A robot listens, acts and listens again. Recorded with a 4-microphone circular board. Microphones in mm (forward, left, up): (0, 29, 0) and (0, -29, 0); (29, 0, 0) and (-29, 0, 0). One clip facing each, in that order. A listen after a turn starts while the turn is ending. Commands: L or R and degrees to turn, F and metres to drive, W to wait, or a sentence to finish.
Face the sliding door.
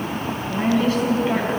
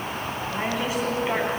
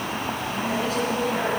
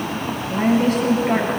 W
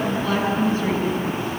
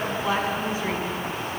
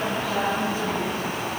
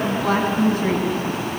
W
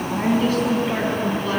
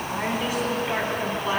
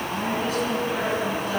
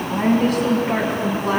I can't make out a sliding door, only a woman speaking.